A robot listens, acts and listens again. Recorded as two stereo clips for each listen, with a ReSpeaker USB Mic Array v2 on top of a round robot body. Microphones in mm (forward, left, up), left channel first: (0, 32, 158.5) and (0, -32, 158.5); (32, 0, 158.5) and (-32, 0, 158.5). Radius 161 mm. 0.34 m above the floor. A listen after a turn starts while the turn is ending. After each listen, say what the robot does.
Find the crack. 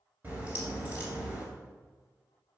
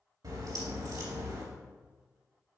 Turn 155° right.
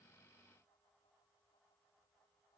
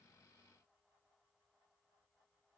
Facing where the crack came from. I can't hear it now.